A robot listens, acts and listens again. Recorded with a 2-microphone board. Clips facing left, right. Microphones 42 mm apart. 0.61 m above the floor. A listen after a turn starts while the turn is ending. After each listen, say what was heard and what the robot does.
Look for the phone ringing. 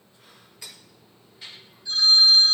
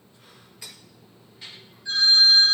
The phone ringing: about 60° right or 120° right. Turn 60° right.
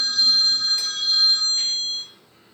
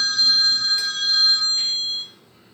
So it is at 55° right. Turn 55° right.
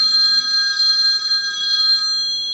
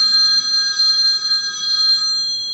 The phone ringing is now 15° left. Turn 15° left.
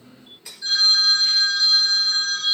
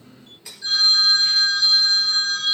Found it: a phone ringing, straight ahead, 1 to 2 m away.